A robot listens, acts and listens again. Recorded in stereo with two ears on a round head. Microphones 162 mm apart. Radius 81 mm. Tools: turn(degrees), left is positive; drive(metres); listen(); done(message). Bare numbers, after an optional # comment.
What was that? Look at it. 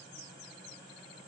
listen()
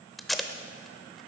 turn(30)
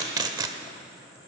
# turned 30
# So it is at 25° right.
turn(-25)
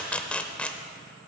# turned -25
# The tape being pulled is now 10° left.
turn(10)
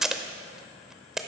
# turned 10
done("Found it: tape being pulled, straight ahead, under 1 m away.")